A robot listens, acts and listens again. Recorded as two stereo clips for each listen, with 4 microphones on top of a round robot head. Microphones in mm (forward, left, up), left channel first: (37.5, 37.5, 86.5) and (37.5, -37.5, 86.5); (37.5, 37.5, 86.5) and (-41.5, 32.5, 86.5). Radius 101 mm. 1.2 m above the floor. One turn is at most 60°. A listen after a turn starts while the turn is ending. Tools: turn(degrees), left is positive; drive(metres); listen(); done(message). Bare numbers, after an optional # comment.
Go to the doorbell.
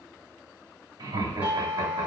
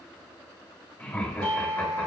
# The doorbell: 160° right.
turn(-60)
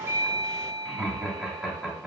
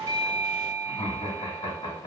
# The doorbell is now 105° right.
turn(-60)
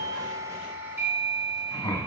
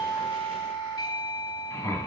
# The doorbell is now 30° right.
turn(-30)
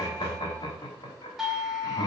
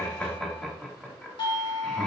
drive(1.0)
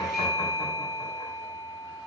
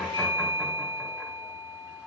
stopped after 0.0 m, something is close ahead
done("Something is in my way. I am facing the doorbell but have not reached it.")